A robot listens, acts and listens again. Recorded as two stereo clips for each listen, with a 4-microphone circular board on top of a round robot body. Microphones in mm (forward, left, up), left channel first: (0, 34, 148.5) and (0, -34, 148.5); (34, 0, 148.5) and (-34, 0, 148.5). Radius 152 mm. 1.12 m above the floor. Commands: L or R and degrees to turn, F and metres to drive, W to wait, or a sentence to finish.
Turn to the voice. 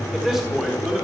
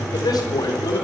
Facing the man speaking.